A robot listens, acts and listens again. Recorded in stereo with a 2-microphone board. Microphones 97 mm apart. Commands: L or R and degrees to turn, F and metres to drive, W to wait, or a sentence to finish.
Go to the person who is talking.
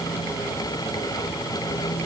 W
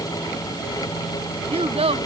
R90
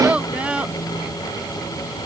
R10
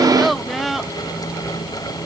F1.0
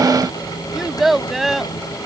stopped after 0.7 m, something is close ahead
Something is in my way. I am facing the child speaking but have not reached it.